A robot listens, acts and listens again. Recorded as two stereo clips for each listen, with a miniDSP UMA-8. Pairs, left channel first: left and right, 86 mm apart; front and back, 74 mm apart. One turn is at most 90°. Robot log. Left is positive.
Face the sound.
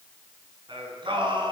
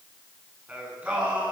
note: The singing: 110° right.
cmd yaw -90
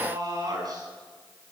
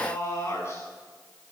note: The singing is now 55° right.
cmd yaw -55
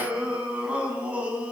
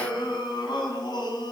note: The singing is now 15° right.
cmd yaw -15
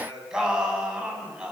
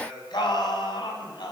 note: The singing is now 10° right.
cmd yaw -10
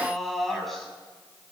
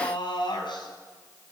end: Facing the singing, over 4 m away.